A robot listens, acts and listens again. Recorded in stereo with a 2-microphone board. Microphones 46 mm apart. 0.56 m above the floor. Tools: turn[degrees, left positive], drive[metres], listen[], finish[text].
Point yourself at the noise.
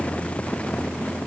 Action: listen[]
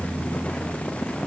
Action: listen[]
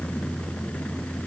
Action: finish[I can't make out anything to turn to.]